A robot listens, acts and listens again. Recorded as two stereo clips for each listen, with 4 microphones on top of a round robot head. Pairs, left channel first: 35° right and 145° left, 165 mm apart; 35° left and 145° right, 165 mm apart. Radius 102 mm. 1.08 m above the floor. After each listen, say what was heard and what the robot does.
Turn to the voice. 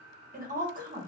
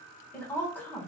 The woman speaking: 110° left. Turn 110° left.
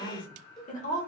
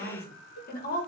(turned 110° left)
Facing the woman speaking, 1 to 2 m away.